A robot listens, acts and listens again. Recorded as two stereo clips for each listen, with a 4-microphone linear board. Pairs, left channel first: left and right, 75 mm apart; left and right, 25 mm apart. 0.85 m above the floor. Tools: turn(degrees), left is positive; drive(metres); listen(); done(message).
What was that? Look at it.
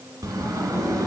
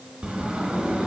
turn(degrees=-55)
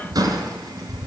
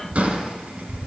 turn(degrees=-65)
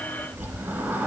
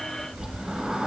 turn(degrees=-25)
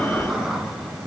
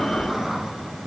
done("Facing the sliding door, 1 to 2 m away.")